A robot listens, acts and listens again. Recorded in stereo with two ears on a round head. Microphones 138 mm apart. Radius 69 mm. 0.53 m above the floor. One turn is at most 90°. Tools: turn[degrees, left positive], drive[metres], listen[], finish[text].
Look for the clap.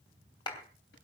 Thought: The clap: about 30° left or 150° left.
Action: turn[30]
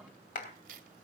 Thought: So it is at 115° left.
Action: turn[90]
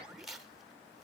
Thought: Nothing new. It was at 25° left.
Action: turn[25]
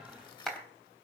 Action: finish[Found it: a clap, straight ahead, 2 to 4 m away.]